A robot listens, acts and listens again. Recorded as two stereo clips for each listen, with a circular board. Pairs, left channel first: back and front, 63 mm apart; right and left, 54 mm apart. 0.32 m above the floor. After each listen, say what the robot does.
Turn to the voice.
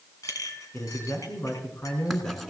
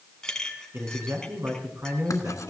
Turn 130° left.
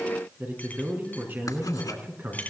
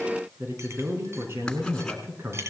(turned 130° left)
Turn 55° left.
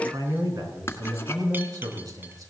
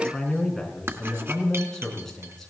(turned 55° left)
Turn 10° right.
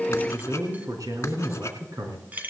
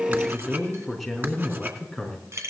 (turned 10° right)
Facing the man speaking.